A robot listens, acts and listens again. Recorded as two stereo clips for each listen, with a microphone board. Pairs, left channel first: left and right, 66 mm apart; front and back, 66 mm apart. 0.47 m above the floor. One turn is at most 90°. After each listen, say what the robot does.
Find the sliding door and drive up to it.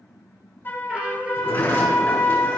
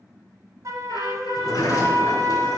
Turn 25° left.
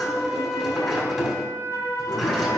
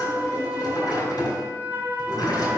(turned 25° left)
Drive 1.0 m forward.
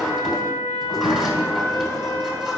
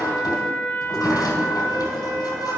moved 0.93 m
Drive 1.0 m forward.
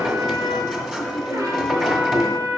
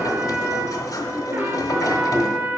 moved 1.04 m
Drive 1.0 m forward.
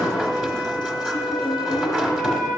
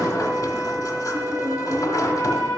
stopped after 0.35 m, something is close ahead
Turn 10° right.
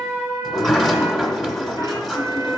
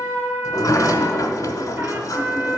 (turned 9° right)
Arrived at the sliding door, straight ahead.